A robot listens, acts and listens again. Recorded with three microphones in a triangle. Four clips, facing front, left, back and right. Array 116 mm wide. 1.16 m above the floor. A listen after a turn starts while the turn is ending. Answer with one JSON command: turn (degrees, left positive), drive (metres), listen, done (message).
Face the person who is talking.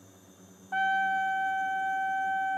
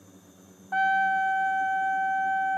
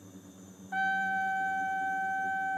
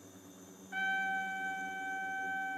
{"listen": true}
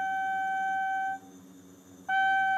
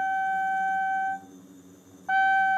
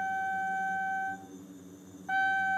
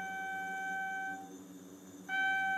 {"listen": true}
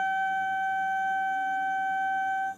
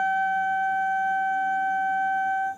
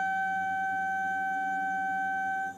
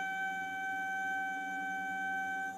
{"done": "I can't make out anyone speaking to turn to."}